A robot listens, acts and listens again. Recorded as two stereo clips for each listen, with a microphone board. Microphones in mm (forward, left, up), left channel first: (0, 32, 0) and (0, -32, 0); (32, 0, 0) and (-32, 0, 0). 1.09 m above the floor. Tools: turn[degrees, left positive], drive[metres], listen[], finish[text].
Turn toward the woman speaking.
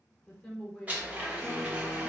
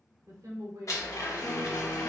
Thought: The woman speaking: straight behind.
Action: turn[180]
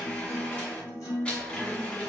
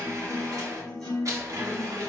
Action: listen[]
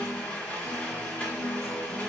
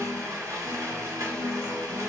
Action: listen[]
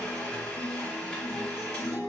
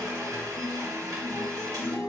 Action: finish[Facing where the woman speaking came from. I can't hear it now.]